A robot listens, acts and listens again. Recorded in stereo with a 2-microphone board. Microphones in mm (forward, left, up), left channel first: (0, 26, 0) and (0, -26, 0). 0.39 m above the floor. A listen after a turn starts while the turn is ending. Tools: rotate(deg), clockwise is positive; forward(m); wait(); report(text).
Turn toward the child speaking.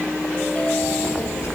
rotate(-65)
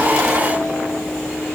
wait()
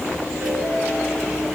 report("Facing the child speaking.")